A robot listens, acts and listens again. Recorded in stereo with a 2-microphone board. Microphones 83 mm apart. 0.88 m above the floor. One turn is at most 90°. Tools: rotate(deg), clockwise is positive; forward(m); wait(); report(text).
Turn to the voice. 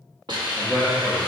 rotate(-30)
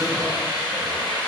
wait()
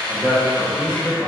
rotate(30)
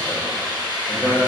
report("Found it: a man speaking, straight ahead.")